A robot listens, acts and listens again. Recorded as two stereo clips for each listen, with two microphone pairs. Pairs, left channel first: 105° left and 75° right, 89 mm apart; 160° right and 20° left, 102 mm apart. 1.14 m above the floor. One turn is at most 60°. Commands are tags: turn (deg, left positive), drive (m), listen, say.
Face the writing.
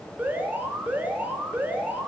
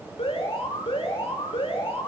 <listen/>
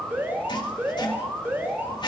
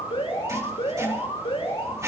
<turn deg="60"/>
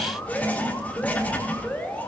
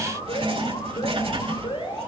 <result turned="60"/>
<turn deg="35"/>
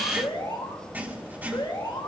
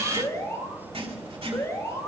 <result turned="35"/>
<say>Facing the writing, 2 to 4 m away.</say>